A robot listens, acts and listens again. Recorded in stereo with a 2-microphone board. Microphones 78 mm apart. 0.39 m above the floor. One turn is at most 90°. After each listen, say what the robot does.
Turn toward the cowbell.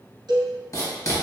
Turn 70° right.
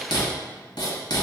Keep listening.
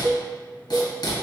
Turn 40° right.
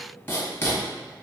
Keep listening.
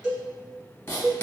Facing the cowbell, 1 to 2 m away.